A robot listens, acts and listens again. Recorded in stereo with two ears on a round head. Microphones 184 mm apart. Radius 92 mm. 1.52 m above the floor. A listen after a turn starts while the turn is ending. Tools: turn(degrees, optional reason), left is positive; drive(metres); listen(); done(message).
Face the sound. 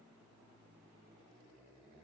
listen()
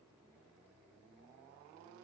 listen()
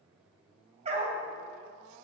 turn(degrees=-30, reason="The dog barking: about 30° right or 150° right.")
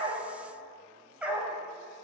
done("Found it: a dog barking, straight ahead, 2 to 4 m away.")